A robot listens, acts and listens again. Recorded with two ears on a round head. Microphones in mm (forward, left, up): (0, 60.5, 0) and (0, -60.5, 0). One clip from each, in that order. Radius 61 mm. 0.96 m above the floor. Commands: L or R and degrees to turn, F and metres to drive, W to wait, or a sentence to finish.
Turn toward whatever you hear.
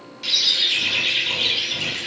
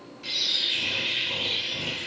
L70
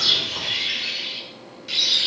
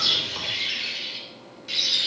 Facing the bird, 2 to 4 m away.